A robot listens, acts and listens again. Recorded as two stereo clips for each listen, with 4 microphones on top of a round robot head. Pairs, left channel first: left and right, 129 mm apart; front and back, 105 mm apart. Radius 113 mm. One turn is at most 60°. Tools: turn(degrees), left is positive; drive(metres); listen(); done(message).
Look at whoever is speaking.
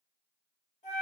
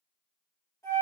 listen()
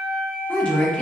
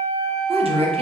turn(degrees=60)
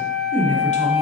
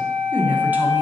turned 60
turn(degrees=60)
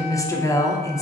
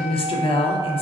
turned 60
turn(degrees=25)
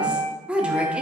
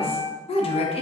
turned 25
turn(degrees=-10)
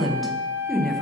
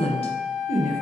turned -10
done("Found it: a woman speaking, straight ahead, under 1 m away.")